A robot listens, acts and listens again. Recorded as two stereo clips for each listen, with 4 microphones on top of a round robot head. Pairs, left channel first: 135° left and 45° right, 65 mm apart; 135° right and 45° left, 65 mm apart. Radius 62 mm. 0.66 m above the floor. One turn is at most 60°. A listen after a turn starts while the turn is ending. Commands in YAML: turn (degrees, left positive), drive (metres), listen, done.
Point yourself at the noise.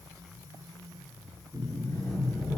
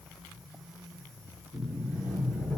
turn: 60
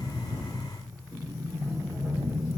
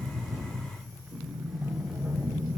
turn: 60
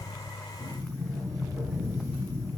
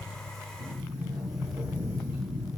turn: 30
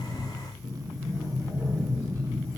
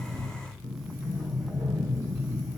turn: 10
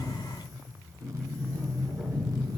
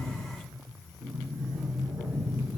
done: "Facing the sliding door."